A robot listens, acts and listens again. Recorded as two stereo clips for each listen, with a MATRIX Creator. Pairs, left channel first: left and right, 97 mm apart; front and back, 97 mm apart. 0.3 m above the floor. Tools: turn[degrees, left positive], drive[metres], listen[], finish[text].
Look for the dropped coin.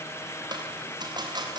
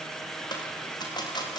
Thought: The dropped coin: 45° right.
Action: turn[-45]
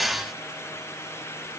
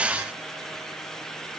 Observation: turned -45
Action: finish[Facing where the dropped coin came from. I can't hear it now.]